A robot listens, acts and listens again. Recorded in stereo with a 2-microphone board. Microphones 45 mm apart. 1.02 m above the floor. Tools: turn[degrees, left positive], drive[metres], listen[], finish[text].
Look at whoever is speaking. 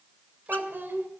Thought: The child speaking: about 50° right or 130° right.
Action: turn[-50]
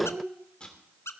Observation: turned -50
Thought: So it is at 80° right.
Action: turn[-80]
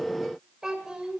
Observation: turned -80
Thought: The child speaking is now 15° right.
Action: turn[-15]
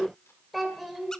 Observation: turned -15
Action: finish[Found it: a child speaking, straight ahead.]